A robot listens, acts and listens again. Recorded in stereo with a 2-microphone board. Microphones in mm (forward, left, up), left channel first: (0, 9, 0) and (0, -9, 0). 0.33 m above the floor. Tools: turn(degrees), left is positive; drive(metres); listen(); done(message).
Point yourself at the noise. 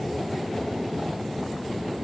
listen()
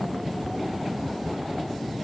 listen()
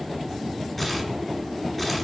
turn(degrees=30)
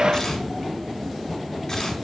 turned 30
turn(degrees=150)
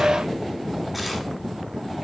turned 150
done("Facing the tearing paper.")